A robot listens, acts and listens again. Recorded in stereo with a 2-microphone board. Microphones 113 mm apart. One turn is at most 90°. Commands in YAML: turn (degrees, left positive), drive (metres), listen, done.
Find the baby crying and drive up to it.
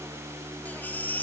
turn: 30
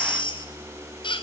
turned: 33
turn: 90
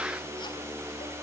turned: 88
turn: 45
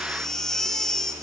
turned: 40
drive: 1.0
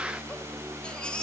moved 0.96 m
turn: 10
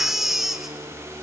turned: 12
drive: 1.0
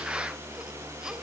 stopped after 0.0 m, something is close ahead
listen: true
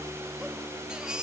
done: "Blocked. The baby crying is further on, straight ahead."